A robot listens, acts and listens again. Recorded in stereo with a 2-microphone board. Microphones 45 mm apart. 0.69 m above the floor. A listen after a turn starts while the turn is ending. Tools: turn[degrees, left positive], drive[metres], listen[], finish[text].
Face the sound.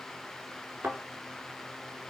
Thought: The thud: about 65° right or 115° right.
Action: turn[-65]
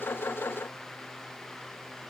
Action: listen[]
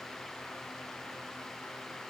Action: finish[I heard a thud, but can't make it out now. It was about straight ahead or 50° right.]